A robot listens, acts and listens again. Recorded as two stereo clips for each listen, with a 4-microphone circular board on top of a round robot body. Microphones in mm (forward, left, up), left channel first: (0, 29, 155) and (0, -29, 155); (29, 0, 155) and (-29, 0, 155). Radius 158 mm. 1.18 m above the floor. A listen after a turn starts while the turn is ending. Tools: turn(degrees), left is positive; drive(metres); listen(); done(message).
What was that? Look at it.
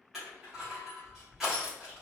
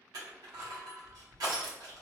turn(degrees=-175)
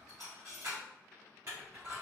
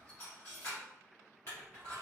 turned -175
turn(degrees=-45)
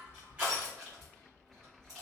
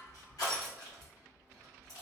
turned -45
turn(degrees=-10)
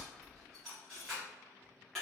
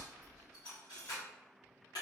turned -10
done("Facing the crushing, under 1 m away.")